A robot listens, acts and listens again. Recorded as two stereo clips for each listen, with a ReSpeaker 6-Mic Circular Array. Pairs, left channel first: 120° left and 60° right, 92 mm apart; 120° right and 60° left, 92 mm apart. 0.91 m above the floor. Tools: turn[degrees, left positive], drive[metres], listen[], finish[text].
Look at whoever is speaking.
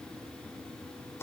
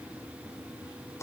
Action: listen[]
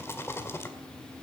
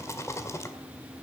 Action: listen[]
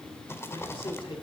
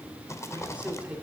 Thought: The man speaking: 135° left.
Action: turn[135]
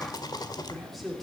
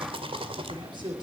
Thought: The man speaking is now 30° left.
Action: turn[30]
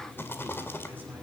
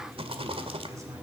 Action: listen[]
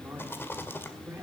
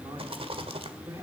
Thought: The man speaking is now 10° left.
Action: turn[10]
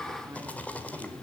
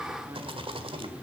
Action: listen[]
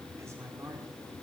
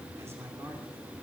Action: finish[Found it: a man speaking, straight ahead.]